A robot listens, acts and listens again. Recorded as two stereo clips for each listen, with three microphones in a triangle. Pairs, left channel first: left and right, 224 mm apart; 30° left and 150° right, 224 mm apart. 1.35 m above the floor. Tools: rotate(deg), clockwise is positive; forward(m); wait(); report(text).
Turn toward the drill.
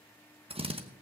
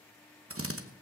rotate(155)
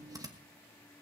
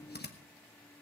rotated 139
rotate(15)
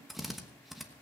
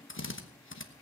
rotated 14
report("Facing the drill.")